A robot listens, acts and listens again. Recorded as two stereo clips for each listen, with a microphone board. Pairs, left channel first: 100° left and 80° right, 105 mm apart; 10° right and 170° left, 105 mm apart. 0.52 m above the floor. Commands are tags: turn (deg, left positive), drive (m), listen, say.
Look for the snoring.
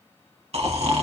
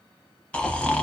<turn deg="-90"/>
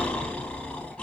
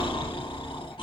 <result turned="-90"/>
<turn deg="20"/>
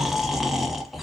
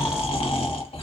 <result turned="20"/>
<turn deg="10"/>
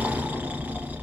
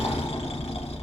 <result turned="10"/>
<say>Found it: snoring, straight ahead.</say>